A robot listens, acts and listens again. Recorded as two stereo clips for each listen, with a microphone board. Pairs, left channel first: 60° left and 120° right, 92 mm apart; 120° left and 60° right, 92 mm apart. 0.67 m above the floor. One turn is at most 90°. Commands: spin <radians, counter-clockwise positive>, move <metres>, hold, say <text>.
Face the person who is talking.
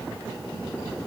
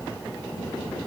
hold
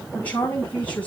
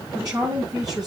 spin -0.26
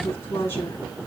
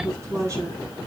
say Facing the woman speaking, over 4 m away.